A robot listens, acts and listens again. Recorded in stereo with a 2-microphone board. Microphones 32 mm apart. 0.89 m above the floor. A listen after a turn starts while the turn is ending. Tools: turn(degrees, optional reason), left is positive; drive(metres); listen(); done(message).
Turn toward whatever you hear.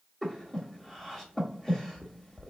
turn(degrees=30)
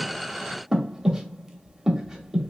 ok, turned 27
turn(degrees=-15, reason="So it is at 15° right.")
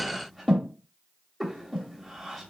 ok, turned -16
done("Found it: breathing, straight ahead, under 1 m away.")